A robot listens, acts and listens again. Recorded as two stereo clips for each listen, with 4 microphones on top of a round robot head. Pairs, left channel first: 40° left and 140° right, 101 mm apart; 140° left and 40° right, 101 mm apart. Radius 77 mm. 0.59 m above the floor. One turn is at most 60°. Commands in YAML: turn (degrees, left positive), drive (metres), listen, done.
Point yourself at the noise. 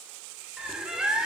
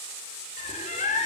turn: 60
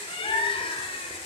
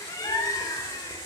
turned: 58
turn: 60
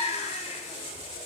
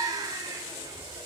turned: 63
turn: 15
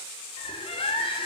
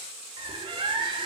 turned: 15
done: "Found it: a bird, straight ahead."